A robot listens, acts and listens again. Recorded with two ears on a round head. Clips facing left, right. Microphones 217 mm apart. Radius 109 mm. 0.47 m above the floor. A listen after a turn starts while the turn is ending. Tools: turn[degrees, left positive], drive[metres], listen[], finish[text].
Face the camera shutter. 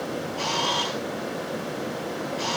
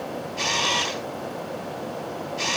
Thought: The camera shutter: about 30° right or 150° right.
Action: turn[-30]
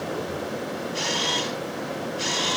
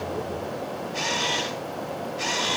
Action: finish[Facing the camera shutter, 2 to 4 m away.]